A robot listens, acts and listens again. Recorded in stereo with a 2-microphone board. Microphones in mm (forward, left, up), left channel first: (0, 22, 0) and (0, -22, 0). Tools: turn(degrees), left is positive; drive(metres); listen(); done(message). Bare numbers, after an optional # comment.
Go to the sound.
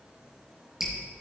turn(-30)
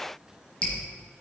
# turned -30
# So it is at 20° left.
turn(20)
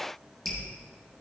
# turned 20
drive(1.0)
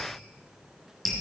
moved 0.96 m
drive(1.0)
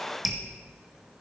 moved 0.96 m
drive(1.0)
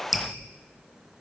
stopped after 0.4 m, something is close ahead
done("Arrived at the dripping, straight ahead.")